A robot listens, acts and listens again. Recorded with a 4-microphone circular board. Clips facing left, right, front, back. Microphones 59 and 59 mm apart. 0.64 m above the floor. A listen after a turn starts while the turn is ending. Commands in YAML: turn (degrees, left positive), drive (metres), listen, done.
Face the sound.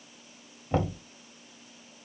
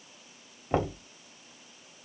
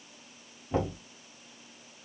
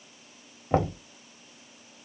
turn: -150
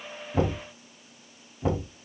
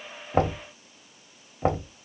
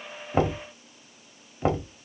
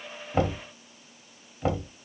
turn: -60
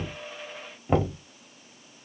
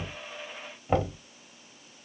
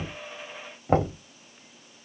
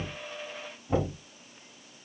done: "Facing the knocking."